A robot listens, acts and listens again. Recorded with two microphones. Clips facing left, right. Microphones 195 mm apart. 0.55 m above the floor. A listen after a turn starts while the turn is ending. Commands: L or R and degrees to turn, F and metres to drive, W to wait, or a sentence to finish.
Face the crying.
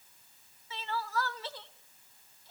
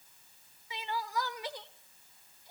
R15
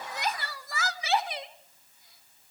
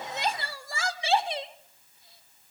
R150
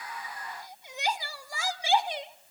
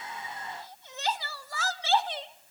L15
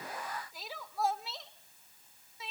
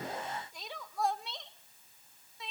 Facing the crying.